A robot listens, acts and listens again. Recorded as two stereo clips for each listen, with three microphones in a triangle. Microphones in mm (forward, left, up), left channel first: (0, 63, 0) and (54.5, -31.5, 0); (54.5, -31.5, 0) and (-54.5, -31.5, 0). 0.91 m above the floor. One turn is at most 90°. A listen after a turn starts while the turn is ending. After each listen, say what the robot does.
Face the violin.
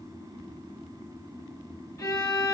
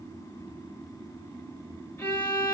Turn 70° left.
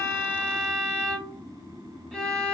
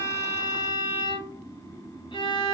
Turn 35° left.
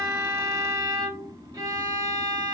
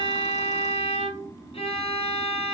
Facing the violin.